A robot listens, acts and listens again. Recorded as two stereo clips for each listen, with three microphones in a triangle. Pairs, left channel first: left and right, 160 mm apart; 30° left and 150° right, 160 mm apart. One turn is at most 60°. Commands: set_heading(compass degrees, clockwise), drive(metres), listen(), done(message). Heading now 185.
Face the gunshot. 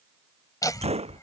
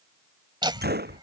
set_heading(245)
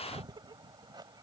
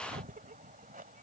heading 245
set_heading(305)
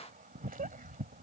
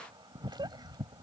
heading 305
set_heading(325)
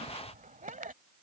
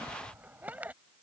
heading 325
done("Facing where the gunshot came from. I can't hear it now.")